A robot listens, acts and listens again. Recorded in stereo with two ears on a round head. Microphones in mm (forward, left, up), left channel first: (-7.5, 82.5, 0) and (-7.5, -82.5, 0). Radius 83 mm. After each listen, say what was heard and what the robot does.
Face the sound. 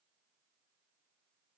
Keep listening.
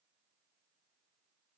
Keep listening.
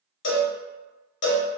The cowbell: about 65° left or 115° left. Turn 65° left.
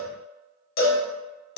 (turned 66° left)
So it is at 50° left. Turn 50° left.
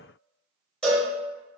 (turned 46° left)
Found it: a cowbell, straight ahead, under 1 m away.